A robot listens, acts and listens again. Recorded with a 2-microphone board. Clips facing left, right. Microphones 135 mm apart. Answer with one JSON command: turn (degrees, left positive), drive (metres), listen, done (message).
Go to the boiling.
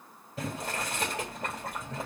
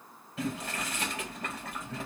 {"turn": 40}
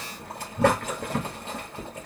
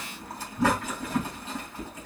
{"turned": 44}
{"turn": 95}
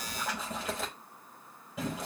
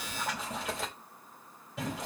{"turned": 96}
{"drive": 1.0}
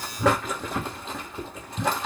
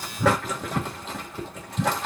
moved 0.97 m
{"drive": 1.0}
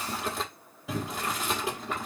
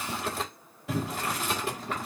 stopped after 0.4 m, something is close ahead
{"done": "I am next to the boiling."}